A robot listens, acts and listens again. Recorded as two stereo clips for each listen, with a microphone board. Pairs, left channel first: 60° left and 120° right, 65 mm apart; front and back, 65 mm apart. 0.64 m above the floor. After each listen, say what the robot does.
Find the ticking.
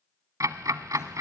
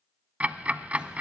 Turn 115° right.
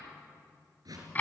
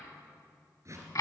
Facing the ticking, under 1 m away.